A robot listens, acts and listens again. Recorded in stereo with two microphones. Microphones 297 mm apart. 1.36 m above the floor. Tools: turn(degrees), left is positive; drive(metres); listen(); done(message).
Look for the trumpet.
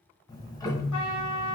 turn(degrees=70)
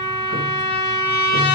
turn(degrees=35)
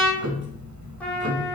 done("Facing the trumpet.")